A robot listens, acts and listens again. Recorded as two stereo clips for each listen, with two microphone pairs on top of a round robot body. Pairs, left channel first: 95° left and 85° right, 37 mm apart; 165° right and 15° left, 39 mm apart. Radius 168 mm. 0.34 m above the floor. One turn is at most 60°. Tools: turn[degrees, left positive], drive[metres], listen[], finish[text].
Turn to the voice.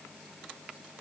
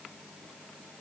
Action: listen[]
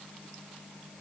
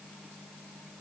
Action: listen[]
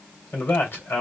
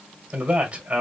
Thought: The man speaking: 70° left.
Action: turn[60]
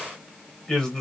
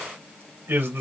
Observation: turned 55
Thought: The man speaking is now 15° left.
Action: turn[15]
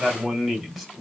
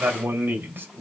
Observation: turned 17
Action: finish[Found it: a man speaking, straight ahead.]